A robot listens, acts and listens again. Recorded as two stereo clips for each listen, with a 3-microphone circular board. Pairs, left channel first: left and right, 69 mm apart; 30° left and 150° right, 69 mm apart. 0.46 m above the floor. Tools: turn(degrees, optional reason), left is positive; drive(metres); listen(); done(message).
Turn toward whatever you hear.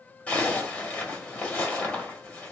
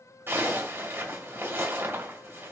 turn(degrees=160, reason="The zipper: 160° left.")
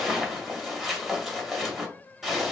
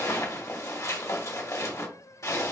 done("Facing the zipper.")